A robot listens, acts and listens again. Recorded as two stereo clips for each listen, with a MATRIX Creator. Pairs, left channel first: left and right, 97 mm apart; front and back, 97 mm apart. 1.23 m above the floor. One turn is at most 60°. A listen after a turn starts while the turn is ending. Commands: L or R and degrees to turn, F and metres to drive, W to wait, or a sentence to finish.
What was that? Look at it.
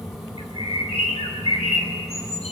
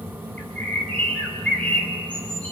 L60
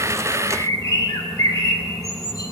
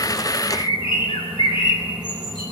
L35
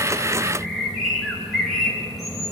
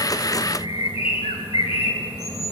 Facing the bird.